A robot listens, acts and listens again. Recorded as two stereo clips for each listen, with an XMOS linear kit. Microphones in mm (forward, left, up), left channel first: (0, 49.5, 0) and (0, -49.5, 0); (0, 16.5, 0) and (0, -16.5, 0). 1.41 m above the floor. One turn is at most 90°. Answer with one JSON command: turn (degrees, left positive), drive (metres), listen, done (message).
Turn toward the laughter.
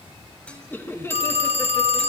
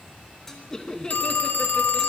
{"turn": 25}
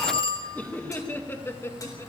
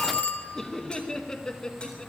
{"turn": 25}
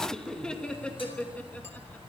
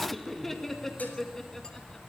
{"turn": 30}
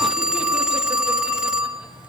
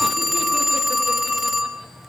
{"listen": true}
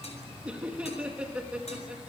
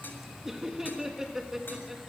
{"turn": -10}
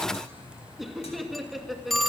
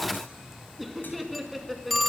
{"done": "Found it: laughter, straight ahead."}